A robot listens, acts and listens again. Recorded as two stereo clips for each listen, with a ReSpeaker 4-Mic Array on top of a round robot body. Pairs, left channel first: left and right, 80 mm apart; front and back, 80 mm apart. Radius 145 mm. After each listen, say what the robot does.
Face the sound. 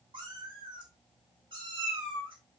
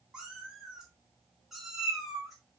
Turn 90° right.
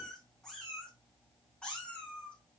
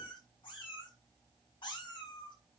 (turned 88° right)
Turn 15° left.
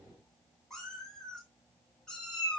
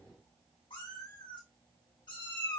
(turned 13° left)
Turn 10° left.
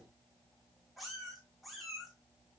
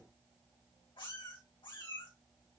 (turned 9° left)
Facing the cat meowing, over 4 m away.